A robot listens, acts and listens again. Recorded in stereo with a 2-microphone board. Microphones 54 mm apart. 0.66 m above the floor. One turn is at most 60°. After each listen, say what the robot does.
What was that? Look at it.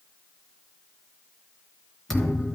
Turn 30° left.
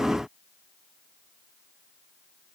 Keep listening.
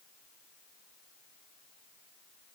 I heard a thud, but can't make it out now. It was about 20° right or 140° left.